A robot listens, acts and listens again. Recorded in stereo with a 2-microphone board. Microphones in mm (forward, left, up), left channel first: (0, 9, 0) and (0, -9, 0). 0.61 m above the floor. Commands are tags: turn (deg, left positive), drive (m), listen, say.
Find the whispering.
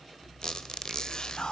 <turn deg="60"/>
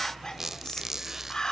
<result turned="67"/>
<turn deg="40"/>
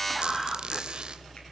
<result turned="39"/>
<say>Found it: whispering, straight ahead.</say>